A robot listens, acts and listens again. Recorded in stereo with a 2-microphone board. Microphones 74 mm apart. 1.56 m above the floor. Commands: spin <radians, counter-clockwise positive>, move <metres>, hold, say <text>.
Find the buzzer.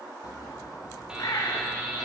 spin -0.52
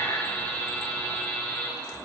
spin 0.35
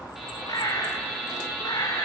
say Facing the buzzer, 2 to 4 m away.